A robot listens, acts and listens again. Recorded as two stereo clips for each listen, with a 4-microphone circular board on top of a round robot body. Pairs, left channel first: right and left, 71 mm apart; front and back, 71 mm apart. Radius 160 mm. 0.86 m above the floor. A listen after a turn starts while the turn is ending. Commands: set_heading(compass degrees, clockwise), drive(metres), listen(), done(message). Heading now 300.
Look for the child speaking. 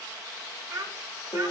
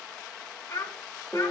set_heading(240)
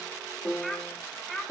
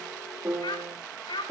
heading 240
set_heading(230)
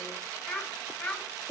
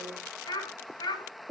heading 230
done("Facing the child speaking, over 4 m away.")